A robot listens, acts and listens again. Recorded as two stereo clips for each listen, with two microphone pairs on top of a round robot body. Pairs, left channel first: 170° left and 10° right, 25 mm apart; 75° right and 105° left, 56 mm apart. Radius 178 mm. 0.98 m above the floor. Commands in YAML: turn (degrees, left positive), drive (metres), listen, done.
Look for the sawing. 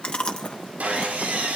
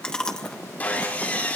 turn: -15
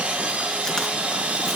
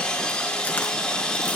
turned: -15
done: "Found it: sawing, straight ahead."